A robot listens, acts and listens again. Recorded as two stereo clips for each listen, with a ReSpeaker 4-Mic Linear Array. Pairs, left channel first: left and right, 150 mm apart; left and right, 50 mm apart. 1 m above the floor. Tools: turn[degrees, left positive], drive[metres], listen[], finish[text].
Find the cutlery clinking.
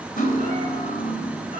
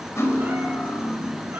Thought: The cutlery clinking: about 70° left or 110° left.
Action: turn[70]
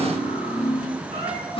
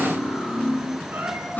Thought: So it is at 40° left.
Action: turn[40]
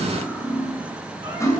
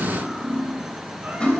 Thought: The cutlery clinking is now 20° left.
Action: turn[20]
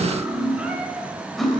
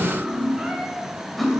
Action: finish[Found it: cutlery clinking, straight ahead, 2 to 4 m away.]